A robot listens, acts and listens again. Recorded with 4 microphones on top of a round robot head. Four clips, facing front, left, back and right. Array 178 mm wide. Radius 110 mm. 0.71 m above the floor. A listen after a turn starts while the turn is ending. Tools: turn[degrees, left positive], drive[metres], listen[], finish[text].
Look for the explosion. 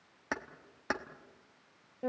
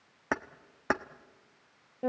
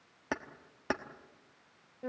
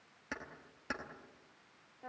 Action: listen[]
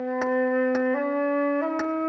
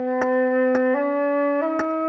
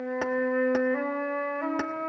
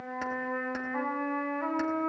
Action: listen[]
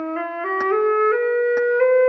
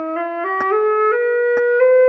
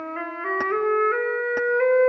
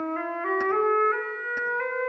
Action: finish[I can't make out an explosion, only keys jangling and a flute.]